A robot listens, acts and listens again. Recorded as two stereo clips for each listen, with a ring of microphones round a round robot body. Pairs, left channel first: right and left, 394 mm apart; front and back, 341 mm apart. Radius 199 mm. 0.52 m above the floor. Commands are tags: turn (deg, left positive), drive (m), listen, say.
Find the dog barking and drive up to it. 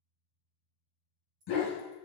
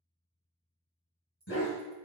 <turn deg="-60"/>
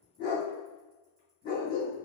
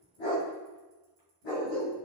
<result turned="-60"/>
<turn deg="-20"/>
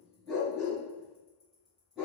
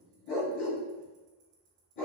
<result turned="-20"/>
<drive m="1.0"/>
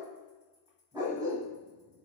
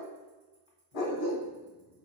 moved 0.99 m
<turn deg="10"/>
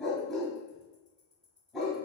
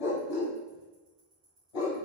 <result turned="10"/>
<drive m="1.0"/>
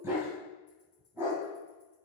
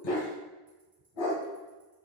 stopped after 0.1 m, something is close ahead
<say>I am next to the dog barking.</say>